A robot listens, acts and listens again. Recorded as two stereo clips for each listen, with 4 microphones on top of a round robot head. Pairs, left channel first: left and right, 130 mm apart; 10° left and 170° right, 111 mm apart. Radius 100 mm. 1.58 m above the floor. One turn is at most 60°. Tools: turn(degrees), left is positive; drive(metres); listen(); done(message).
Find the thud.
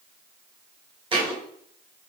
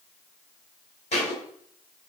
turn(degrees=-45)
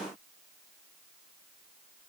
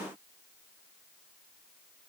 done("Facing where the thud came from. I can't hear it now.")